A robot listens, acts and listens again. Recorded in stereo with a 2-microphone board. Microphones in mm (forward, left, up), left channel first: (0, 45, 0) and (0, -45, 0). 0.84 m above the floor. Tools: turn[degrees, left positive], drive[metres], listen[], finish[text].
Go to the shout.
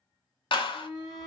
Action: turn[-30]
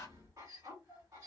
Thought: So it is at 135° right.
Action: turn[-135]
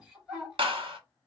Action: drive[1.0]
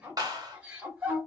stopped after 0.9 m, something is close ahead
Thought: The shout is now 20° right.
Action: turn[-20]
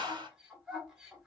Action: finish[I am next to the shout.]